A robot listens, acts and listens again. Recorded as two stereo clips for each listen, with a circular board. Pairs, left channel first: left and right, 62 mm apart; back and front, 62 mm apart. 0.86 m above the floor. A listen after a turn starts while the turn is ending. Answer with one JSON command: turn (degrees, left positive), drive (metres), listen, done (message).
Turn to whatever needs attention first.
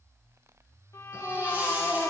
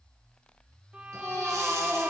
{"turn": -30}
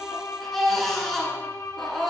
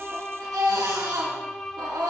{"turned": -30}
{"done": "Facing the baby crying, over 4 m away."}